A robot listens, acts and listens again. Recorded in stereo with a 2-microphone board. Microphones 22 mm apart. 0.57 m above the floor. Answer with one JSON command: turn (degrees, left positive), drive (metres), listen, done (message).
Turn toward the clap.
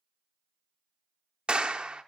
{"turn": -50}
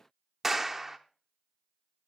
{"turn": -15}
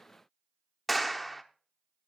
{"done": "Facing the clap."}